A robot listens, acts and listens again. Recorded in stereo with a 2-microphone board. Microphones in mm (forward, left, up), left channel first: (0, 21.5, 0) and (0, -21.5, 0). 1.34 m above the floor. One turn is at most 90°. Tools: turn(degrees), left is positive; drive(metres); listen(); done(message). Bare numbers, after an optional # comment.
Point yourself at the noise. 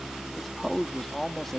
turn(30)
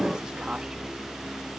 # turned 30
listen()
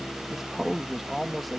turn(30)
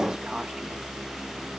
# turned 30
listen()
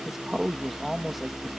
turn(-30)
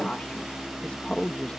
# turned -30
# So it is at 25° left.
turn(25)
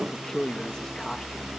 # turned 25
# The man speaking is now 15° left.
turn(15)
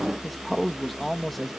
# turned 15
done("Found it: a man speaking, straight ahead.")